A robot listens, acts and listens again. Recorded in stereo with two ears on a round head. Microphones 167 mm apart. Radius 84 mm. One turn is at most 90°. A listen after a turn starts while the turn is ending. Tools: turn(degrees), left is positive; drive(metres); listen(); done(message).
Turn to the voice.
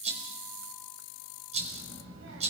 turn(degrees=-90)
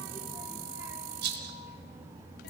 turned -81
turn(degrees=-15)
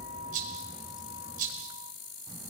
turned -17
done("Facing the child speaking.")